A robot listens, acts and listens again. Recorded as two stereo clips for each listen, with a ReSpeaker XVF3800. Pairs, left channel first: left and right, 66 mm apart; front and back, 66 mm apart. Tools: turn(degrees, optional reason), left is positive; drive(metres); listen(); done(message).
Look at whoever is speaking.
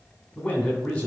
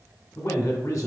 turn(degrees=15, reason="The man speaking: 15° left.")
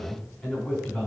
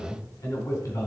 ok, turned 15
done("Found it: a man speaking, straight ahead.")